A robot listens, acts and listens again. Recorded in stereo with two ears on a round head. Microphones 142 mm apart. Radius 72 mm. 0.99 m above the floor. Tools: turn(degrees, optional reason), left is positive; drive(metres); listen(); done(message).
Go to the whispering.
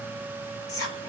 turn(degrees=20, reason="The whispering: about 20° left or 160° left.")
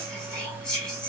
drive(metres=1.0)
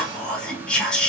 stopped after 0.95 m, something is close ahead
done("Arrived at the whispering, straight ahead.")